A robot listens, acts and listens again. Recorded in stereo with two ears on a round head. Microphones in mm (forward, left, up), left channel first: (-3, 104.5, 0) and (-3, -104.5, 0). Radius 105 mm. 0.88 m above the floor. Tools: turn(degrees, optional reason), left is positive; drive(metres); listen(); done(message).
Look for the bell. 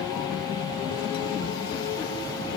listen()
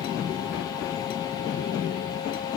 listen()
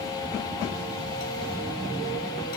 done("I can't make out a bell.")